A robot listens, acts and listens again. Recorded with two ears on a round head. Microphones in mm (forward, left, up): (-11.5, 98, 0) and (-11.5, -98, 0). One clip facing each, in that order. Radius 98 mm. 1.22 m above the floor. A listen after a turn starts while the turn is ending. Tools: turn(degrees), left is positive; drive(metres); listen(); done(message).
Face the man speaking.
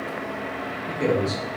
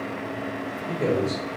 turn(degrees=30)
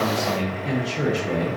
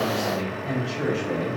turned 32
turn(degrees=125)
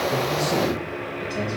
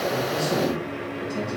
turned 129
turn(degrees=-35)
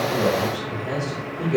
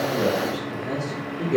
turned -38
turn(degrees=-20)
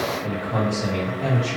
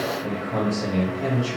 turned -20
turn(degrees=-10)
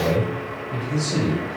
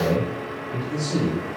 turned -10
done("Facing the man speaking.")